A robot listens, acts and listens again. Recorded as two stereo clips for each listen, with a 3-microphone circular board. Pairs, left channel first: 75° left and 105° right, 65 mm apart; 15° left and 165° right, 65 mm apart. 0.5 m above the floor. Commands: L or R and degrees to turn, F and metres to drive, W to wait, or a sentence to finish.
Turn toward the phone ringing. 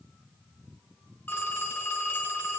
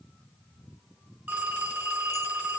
L130
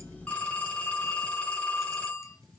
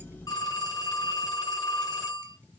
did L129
Facing the phone ringing.